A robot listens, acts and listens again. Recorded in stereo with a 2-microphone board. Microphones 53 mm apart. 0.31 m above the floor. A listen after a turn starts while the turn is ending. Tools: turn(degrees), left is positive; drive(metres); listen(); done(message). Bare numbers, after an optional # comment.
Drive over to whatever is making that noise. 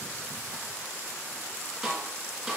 turn(-30)
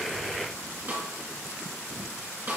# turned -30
# So it is at 140° right.
turn(-140)
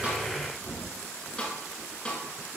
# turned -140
# The snare drum is now 20° left.
turn(20)
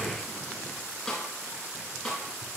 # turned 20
# The snare drum is now 10° left.
turn(10)
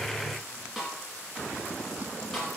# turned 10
drive(1.0)
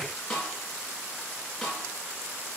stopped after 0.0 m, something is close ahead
done("Blocked. The snare drum is further on, straight ahead.")